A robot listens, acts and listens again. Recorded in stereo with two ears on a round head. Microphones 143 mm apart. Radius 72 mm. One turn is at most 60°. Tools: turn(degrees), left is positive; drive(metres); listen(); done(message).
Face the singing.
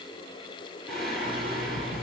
turn(degrees=30)
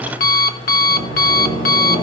turn(degrees=60)
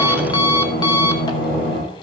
turn(degrees=60)
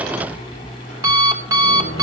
turn(degrees=50)
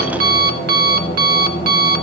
turn(degrees=-15)
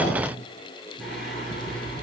done("Facing the singing, over 4 m away.")